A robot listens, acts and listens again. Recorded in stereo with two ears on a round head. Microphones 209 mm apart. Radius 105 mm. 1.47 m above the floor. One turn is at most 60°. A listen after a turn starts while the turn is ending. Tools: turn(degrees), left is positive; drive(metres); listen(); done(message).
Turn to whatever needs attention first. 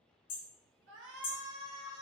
turn(degrees=-55)
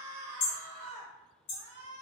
turn(degrees=-60)
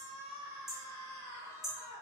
turn(degrees=-15)
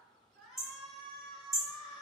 done("Found it: a shout, straight ahead, 1 to 2 m away.")